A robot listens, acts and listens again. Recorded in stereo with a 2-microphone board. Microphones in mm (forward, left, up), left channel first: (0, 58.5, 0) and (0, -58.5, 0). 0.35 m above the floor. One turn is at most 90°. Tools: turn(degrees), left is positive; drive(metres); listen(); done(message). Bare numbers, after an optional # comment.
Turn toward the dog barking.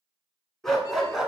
turn(-30)
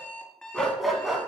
turn(-30)
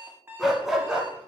turn(-30)
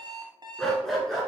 turn(30)
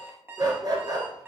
# So it is at 30° right.
turn(-30)
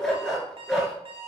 done("Found it: a dog barking, straight ahead.")